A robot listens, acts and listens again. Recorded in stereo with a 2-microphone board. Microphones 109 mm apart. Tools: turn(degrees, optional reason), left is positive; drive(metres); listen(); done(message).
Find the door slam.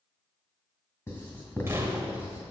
turn(degrees=-25, reason="The door slam: about 25° right or 155° right.")
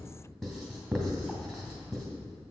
listen()
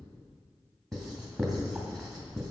done("I heard a door slam, but can't make it out now. It was about straight ahead or 130° right.")